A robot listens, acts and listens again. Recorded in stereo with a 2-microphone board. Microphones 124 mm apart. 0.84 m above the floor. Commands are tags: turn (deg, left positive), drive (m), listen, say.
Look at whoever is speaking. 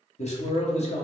<turn deg="55"/>
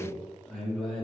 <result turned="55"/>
<say>Found it: a man speaking, straight ahead, 1 to 2 m away.</say>